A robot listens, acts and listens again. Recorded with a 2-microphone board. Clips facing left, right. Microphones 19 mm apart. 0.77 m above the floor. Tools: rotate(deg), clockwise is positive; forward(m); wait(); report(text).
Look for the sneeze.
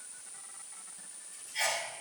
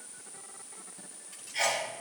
rotate(25)
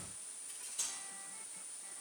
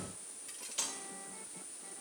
wait()
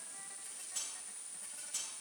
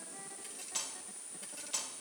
report("I heard a sneeze, but can't make it out now. It was about straight ahead or 130° right.")